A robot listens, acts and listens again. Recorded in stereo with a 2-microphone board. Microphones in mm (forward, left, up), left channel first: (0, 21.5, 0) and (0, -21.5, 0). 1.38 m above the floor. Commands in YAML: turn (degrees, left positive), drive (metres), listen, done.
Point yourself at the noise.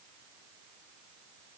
listen: true
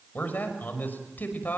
turn: 50
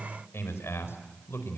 turn: 75
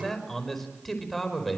done: "Facing the man speaking, over 4 m away."